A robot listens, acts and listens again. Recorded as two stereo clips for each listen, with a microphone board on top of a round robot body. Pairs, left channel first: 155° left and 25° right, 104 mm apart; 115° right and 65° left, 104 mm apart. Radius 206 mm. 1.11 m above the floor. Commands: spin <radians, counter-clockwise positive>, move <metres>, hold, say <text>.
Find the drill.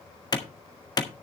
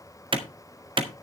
hold
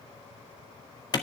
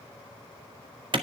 hold
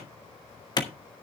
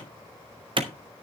say I can't make out a drill to turn to.